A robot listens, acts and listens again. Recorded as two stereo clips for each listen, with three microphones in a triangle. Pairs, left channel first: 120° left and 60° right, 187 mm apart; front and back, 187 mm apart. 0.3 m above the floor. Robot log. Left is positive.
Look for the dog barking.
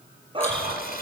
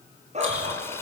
note: The dog barking: 125° right.
cmd yaw -125
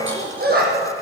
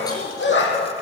note: The dog barking is now 20° right.
cmd yaw -20
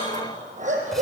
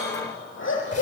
note: The dog barking is now 10° right.
cmd yaw -10
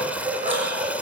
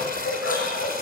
end: Found it: a dog barking, straight ahead.